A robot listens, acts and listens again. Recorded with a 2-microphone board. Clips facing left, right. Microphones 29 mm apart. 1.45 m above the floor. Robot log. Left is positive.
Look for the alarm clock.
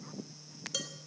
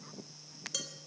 cmd idle
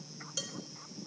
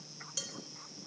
cmd idle
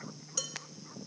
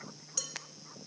end: I can't make out an alarm clock, only dishes clattering.